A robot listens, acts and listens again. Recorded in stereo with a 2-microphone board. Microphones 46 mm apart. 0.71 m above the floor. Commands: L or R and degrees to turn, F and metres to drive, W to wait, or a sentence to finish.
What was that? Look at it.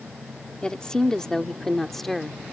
L30
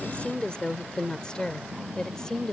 L30
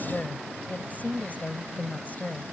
L140
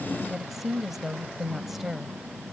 Facing the woman speaking.